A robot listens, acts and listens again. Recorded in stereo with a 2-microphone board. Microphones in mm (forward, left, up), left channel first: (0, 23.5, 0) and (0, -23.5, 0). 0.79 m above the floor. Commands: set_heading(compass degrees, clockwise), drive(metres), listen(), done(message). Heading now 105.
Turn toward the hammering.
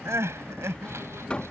set_heading(85)
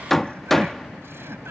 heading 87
done("Found it: hammering, straight ahead.")